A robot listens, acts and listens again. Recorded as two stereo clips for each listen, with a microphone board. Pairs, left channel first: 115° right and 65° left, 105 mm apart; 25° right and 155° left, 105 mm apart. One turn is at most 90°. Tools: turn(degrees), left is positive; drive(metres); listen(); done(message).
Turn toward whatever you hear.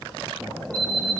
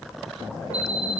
turn(degrees=90)
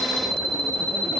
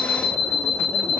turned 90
turn(degrees=90)
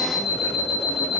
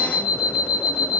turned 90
turn(degrees=40)
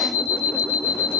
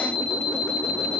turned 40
turn(degrees=10)
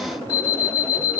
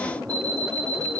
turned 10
done("Found it: an alarm clock, straight ahead, 2 to 4 m away.")